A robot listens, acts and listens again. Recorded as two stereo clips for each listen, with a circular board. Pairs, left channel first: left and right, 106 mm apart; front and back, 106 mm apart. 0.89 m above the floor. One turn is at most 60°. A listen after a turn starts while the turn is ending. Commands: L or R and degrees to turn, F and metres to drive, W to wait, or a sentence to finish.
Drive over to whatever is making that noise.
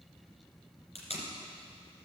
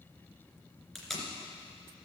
L60
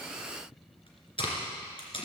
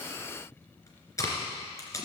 L60
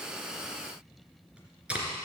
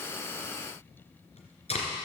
R10
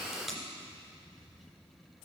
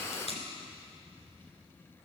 F1.0
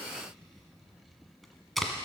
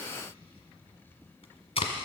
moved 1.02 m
F1.0
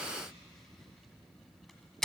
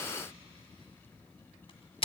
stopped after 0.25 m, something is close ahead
Arrived at the tape being pulled, straight ahead.